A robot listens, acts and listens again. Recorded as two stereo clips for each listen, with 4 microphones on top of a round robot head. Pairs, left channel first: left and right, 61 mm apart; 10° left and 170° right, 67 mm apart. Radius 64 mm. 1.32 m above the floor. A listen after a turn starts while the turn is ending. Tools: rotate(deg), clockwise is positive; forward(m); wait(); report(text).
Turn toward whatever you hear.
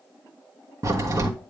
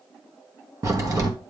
rotate(125)
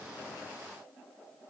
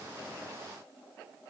report("I heard a crack from this way, but can't make it out now.")